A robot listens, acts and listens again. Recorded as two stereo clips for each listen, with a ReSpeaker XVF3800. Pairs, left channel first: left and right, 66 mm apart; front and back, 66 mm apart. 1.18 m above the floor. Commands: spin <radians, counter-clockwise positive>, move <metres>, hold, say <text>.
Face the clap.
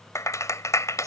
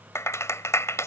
spin 0.87
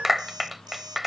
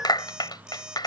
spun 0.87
say Found it: a clap, straight ahead.